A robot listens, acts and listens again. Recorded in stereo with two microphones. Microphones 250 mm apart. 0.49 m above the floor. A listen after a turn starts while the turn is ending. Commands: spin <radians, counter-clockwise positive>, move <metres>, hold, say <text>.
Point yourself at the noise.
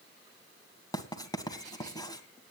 spin 0.26
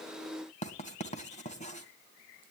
spin 2.62
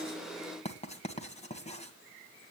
spin 0.44
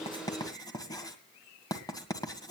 spin 0.26
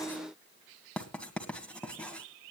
say Facing the writing, 1 to 2 m away.